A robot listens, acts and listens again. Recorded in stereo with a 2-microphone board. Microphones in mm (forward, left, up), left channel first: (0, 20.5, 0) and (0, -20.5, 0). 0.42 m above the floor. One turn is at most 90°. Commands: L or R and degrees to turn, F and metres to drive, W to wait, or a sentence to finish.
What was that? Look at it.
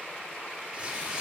R20
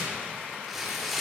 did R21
Found it: tearing paper, straight ahead.